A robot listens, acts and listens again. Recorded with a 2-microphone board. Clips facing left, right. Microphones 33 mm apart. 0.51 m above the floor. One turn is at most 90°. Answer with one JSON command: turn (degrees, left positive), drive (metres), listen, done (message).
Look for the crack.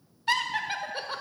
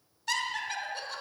{"listen": true}
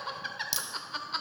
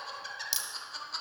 {"turn": 30}
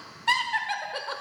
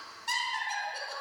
{"listen": true}
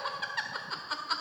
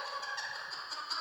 {"done": "I heard a crack, but can't make it out now. It was about 30° right or 150° left."}